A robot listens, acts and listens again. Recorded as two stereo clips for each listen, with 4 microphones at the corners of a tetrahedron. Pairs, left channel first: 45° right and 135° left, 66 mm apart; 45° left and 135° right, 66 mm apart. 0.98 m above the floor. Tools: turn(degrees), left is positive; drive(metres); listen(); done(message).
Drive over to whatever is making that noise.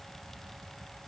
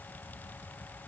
listen()
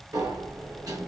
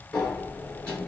turn(degrees=115)
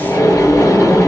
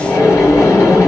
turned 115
drive(metres=1.0)
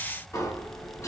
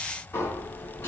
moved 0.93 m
drive(metres=1.0)
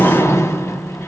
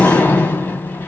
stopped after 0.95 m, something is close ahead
turn(degrees=-10)
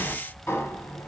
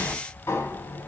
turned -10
done("I am next to the sliding door.")